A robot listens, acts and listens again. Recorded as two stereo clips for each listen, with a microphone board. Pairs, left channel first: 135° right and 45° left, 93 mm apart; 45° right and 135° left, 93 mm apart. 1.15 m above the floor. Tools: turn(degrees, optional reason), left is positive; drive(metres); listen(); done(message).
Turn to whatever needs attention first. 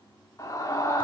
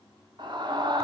turn(degrees=170, reason="The scream: 170° left.")
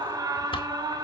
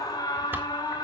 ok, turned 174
done("Facing the scream.")